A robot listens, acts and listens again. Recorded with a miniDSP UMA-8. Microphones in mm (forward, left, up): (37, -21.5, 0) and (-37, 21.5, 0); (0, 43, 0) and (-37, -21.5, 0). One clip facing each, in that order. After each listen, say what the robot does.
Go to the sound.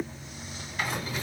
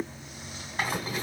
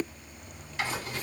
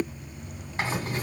Turn 160° right.
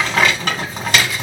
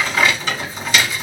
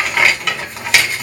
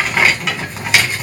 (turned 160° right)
Turn 35° right.
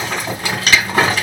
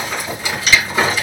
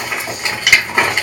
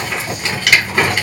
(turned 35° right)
Turn 10° right.
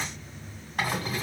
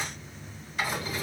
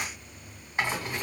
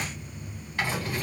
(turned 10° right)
Drive 1.0 m forward.
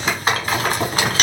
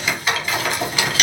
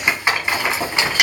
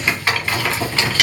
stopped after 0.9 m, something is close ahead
Arrived at the rattle, straight ahead.